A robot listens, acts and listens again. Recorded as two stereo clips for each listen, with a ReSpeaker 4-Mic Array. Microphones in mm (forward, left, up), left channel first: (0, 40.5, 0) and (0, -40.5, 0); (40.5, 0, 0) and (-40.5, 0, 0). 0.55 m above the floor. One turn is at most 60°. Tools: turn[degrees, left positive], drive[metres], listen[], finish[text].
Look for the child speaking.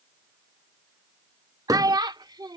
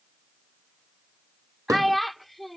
Thought: The child speaking: 90° right.
Action: turn[-60]
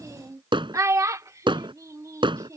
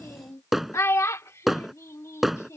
Thought: The child speaking is now 50° right.
Action: turn[-50]
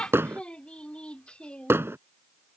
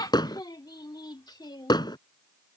Thought: The child speaking is now 15° left.
Action: turn[15]
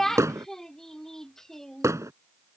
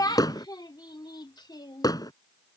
Action: finish[Facing the child speaking.]